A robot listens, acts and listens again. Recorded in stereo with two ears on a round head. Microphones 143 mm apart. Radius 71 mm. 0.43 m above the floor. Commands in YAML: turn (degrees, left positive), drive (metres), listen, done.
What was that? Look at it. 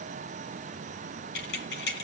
turn: 75
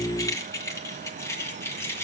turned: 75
turn: 15
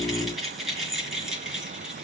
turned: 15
done: "Found it: keys jangling, straight ahead, over 4 m away."